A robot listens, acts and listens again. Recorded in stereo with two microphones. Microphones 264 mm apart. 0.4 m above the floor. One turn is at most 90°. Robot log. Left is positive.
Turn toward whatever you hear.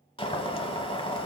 note: The boiling: about 20° left or 160° left.
cmd yaw +20
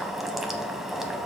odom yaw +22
end: Found it: boiling, straight ahead, under 1 m away.